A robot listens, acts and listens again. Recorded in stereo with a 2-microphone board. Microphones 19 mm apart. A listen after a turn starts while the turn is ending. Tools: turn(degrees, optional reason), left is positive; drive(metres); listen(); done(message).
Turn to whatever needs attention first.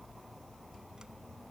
listen()
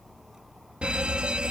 turn(degrees=-70, reason="The fire alarm: about 70° right or 110° right.")
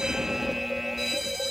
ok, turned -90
done("Found it: a fire alarm, straight ahead.")